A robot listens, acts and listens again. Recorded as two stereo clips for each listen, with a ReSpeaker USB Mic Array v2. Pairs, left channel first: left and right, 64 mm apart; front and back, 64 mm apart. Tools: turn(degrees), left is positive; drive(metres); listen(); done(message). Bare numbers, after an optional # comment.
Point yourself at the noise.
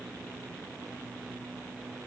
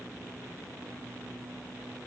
listen()
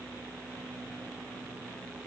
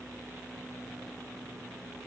listen()
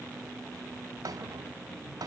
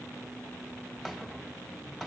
# The rattle: 85° right.
turn(-85)
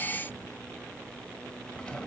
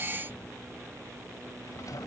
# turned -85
# The rattle is now 20° left.
turn(20)
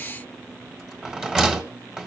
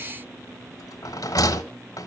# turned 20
done("Facing the rattle.")